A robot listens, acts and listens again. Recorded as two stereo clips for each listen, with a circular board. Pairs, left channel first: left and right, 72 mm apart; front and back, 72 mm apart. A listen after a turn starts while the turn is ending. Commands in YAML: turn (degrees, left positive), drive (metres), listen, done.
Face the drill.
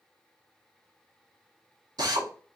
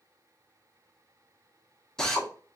turn: -80
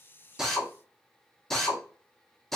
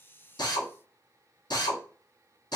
done: "Found it: a drill, straight ahead, under 1 m away."